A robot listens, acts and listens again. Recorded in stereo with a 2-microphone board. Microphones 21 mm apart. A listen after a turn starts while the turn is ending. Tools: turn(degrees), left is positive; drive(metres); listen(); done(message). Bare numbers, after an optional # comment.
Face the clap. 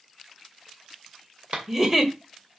# The clap: about 60° right or 120° right.
turn(-60)
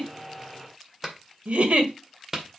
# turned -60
# So it is at 15° right.
turn(-15)
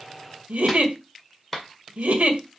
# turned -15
done("Found it: a clap, straight ahead, 2 to 4 m away.")